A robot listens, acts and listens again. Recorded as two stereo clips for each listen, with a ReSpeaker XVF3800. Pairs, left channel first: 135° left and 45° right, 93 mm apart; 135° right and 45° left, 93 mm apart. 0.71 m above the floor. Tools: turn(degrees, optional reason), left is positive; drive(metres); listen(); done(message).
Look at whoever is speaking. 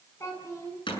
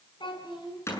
turn(degrees=-170, reason="The child speaking: 170° right.")
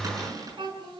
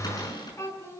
turn(degrees=-75, reason="The child speaking is now 75° right.")
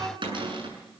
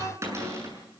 listen()
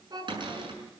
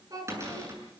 done("Facing the child speaking, over 4 m away.")